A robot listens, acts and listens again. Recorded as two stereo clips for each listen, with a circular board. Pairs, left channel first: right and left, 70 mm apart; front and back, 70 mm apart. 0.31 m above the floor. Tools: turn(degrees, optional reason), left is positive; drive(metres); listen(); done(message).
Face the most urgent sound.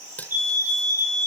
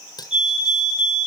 turn(degrees=-100, reason="The fire alarm: 100° right.")
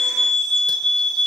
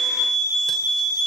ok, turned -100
done("Found it: a fire alarm, straight ahead.")